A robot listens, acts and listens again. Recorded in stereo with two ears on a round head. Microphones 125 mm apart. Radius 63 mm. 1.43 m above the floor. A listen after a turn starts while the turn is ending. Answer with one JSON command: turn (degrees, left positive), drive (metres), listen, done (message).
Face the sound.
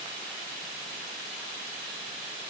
{"listen": true}
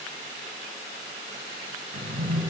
{"turn": -45}
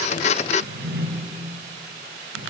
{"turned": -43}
{"turn": -90}
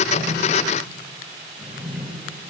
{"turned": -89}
{"done": "Facing the drawer."}